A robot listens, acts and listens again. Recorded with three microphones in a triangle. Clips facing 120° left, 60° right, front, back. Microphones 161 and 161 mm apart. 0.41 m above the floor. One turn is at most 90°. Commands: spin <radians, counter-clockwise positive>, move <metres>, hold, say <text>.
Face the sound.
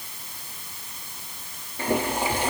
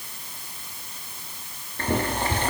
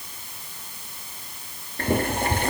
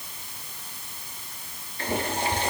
spin 0.70
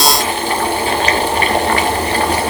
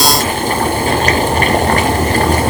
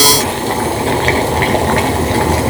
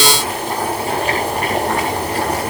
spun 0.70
spin -0.26
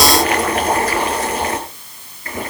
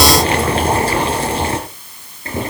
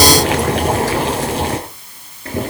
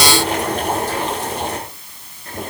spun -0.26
say Facing the boiling, 2 to 4 m away.